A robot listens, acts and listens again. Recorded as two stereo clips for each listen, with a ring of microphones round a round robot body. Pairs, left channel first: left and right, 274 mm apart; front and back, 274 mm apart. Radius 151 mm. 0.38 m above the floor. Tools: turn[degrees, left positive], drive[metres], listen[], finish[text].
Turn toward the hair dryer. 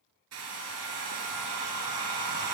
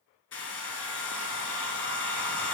Thought: The hair dryer: 45° right.
Action: turn[-45]
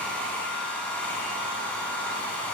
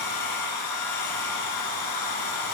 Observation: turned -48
Action: finish[Found it: a hair dryer, straight ahead.]